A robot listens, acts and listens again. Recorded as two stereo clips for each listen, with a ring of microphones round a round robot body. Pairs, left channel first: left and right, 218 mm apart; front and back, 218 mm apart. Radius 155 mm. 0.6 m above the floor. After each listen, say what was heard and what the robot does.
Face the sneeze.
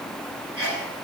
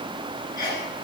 The sneeze: 90° right. Turn 90° right.
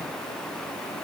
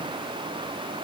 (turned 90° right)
I heard a sneeze from this way, but can't make it out now.